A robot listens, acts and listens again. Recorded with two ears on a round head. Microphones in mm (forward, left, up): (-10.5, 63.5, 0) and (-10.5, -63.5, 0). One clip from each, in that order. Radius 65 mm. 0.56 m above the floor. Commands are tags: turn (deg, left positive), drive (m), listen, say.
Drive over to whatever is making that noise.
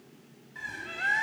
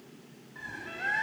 <turn deg="40"/>
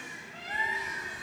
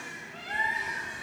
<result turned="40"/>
<drive m="1.0"/>
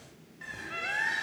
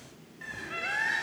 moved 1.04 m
<drive m="1.0"/>
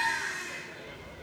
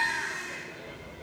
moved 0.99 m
<turn deg="15"/>
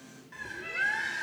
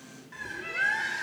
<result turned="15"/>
<drive m="1.0"/>
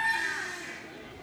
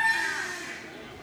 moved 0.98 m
<turn deg="-10"/>
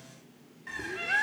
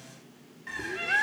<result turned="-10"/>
<drive m="1.0"/>
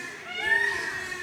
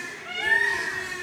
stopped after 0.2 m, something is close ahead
<say>I am next to the bird.</say>